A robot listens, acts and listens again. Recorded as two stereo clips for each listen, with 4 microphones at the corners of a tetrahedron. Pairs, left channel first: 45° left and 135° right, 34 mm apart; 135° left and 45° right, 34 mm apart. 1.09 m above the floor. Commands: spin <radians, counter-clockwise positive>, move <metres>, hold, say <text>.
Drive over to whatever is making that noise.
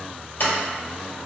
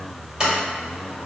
spin 0.52
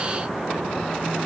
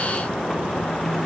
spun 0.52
hold
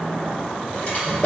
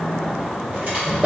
move 1.0
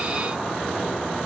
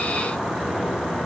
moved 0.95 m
hold
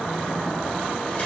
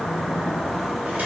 hold
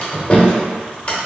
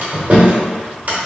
move 1.0
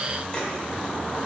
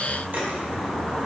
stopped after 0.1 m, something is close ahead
hold
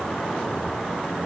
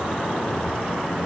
hold
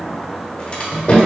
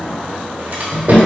say I am next to the sliding door.